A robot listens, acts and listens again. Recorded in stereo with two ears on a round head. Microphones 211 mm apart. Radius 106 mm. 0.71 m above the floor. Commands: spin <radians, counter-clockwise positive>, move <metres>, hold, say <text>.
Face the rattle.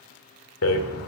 spin 1.13
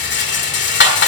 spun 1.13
spin 0.87
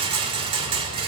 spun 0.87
spin -0.44
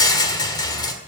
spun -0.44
spin 0.26
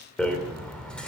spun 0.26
say Found it: a rattle, straight ahead.